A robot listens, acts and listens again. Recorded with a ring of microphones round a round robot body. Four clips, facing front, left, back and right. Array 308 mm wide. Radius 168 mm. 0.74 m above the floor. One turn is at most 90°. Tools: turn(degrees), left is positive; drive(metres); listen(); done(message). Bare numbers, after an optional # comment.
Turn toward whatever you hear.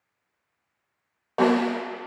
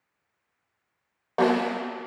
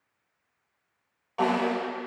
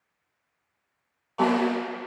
# The snare drum: 50° left.
turn(50)
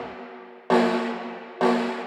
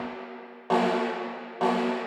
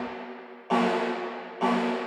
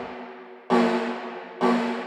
done("Facing the snare drum, 2 to 4 m away.")